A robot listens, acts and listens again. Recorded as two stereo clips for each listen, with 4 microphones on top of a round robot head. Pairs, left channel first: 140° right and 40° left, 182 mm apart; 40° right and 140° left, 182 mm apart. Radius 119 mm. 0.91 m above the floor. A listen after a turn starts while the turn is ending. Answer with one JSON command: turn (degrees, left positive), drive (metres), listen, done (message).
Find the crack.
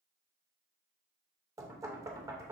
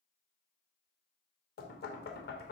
{"listen": true}
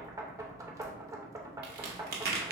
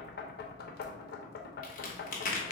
{"done": "Found it: a crack, straight ahead."}